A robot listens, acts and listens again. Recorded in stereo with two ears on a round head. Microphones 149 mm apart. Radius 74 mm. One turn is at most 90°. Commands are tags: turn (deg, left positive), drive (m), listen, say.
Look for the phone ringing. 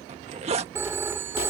<turn deg="-15"/>
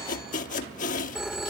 <say>Found it: a phone ringing, straight ahead.</say>